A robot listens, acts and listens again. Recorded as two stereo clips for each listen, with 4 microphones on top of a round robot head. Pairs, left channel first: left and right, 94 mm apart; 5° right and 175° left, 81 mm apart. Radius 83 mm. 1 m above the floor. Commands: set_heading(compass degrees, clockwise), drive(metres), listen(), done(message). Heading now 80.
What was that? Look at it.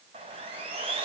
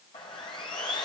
set_heading(130)
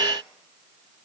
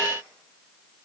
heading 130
listen()
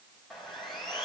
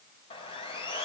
done("Facing the sawing, 2 to 4 m away.")